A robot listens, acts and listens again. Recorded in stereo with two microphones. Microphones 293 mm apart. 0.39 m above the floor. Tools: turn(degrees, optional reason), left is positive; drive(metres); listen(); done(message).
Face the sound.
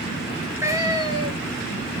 turn(degrees=-30)
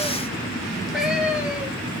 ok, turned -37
done("Facing the cat meowing.")